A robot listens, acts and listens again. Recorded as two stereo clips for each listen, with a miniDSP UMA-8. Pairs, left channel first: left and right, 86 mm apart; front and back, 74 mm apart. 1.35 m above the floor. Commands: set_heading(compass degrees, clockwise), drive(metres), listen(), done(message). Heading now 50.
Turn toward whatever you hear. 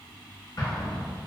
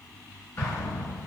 set_heading(355)
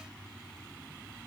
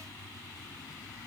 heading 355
done("I heard an explosion from this way, but can't make it out now.")